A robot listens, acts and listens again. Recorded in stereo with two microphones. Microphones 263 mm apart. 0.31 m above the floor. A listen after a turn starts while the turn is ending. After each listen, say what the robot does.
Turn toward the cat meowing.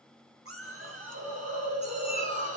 Turn 35° right.
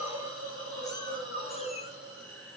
Keep listening.
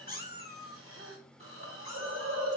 Turn 40° left.
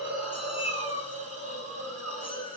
Turn 20° left.
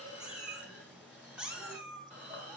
Facing the cat meowing, 1 to 2 m away.